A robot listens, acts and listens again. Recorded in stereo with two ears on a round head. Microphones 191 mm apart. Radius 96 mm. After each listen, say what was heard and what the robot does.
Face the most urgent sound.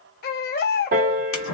The baby crying: about 45° left or 135° left. Turn 45° left.
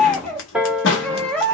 Found it: a baby crying, straight ahead.